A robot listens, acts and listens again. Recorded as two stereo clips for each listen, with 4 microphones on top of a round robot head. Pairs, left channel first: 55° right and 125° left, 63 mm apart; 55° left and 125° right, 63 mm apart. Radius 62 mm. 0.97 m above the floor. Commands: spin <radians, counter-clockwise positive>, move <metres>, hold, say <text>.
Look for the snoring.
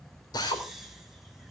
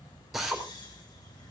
spin 0.70
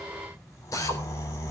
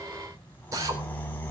spin -0.17
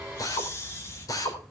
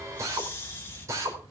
say Facing the snoring.